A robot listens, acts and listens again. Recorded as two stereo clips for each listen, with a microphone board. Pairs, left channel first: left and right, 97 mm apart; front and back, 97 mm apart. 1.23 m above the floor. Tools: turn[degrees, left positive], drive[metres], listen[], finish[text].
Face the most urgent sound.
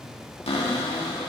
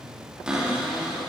Action: listen[]
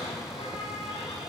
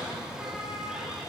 Action: listen[]
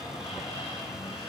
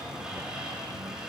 Action: finish[I can't make out anything urgent to turn to.]